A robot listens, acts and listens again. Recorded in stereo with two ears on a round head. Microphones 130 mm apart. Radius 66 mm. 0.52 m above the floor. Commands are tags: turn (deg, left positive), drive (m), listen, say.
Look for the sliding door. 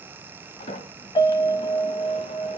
<turn deg="40"/>
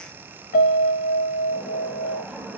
<say>Found it: a sliding door, straight ahead.</say>